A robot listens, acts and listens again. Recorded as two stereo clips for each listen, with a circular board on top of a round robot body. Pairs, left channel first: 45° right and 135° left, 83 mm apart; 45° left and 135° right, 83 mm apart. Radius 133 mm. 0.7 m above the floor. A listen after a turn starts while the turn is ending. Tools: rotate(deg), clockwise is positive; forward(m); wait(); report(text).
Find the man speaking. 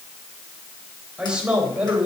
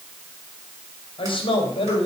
rotate(-60)
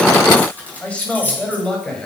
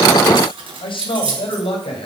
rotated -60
rotate(-35)
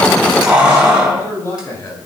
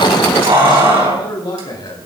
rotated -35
rotate(-15)
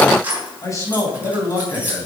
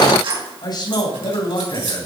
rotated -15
rotate(-10)
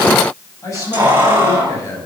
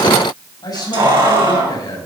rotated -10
report("Found it: a man speaking, straight ahead, over 4 m away.")